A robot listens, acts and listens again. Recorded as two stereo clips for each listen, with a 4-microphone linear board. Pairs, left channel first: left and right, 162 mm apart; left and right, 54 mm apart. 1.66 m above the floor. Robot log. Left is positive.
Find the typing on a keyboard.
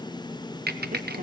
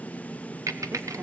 cmd yaw -90
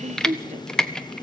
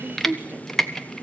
end: Found it: typing on a keyboard, straight ahead, 1 to 2 m away.